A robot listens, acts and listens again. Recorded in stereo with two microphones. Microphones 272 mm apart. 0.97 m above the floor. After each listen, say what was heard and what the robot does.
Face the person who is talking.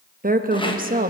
The woman speaking: about 30° right or 150° right. Turn 30° right.
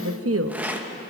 So it is at 120° right. Turn 120° right.
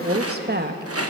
The woman speaking is now 40° right. Turn 40° right.
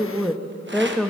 Facing the woman speaking, under 1 m away.